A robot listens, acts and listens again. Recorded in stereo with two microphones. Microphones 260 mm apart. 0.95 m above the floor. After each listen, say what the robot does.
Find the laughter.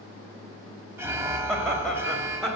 Turn 30° left.
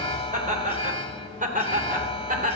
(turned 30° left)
Turn 30° right.
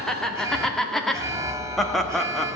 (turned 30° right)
Found it: laughter, straight ahead, 1 to 2 m away.